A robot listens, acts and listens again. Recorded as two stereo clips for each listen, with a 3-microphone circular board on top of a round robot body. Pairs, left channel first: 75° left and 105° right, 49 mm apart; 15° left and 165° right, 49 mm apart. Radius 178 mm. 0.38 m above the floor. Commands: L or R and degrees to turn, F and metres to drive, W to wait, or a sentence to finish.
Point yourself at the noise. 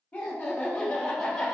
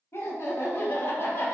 Found it: laughter, straight ahead.